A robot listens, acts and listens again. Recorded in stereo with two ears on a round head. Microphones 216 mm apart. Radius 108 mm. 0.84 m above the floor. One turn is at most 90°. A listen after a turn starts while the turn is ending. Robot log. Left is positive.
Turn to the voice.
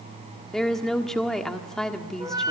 cmd yaw +30
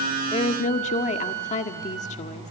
note: So it is at 150° left.
cmd yaw +90
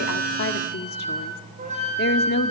note: The woman speaking is now 45° left.
cmd yaw +45
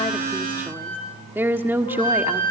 note: The woman speaking is now 10° right.
cmd yaw -10
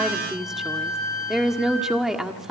end: Facing the woman speaking.